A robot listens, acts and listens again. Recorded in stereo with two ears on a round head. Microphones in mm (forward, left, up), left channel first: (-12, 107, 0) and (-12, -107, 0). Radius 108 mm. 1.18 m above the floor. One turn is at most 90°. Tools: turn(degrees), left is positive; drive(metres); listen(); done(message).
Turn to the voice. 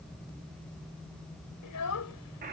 turn(degrees=90)
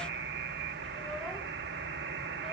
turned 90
listen()
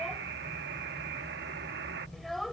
done("Facing the child speaking.")